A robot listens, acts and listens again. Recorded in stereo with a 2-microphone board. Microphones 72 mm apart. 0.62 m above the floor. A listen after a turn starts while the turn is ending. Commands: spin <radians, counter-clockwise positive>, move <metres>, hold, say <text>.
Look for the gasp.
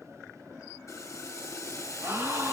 spin -0.61
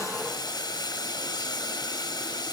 hold
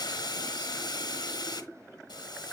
say I heard a gasp, but can't make it out now. It was about straight ahead or 110° right.